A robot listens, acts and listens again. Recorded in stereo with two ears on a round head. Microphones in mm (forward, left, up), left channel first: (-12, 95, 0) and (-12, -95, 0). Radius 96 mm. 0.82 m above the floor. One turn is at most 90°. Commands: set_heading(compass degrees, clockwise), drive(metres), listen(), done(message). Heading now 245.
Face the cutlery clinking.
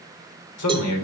listen()
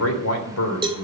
listen()
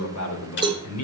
set_heading(185)
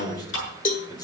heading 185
set_heading(125)
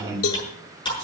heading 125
set_heading(105)
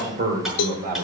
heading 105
listen()
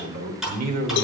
done("Facing the cutlery clinking.")